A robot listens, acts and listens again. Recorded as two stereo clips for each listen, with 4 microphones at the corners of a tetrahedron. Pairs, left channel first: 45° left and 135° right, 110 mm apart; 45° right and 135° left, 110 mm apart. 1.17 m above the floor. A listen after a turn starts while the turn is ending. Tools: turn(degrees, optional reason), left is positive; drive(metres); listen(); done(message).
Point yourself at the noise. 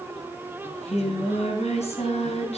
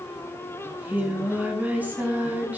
turn(degrees=60, reason="The singing: 60° left.")
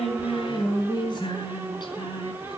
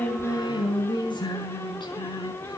done("Facing the singing.")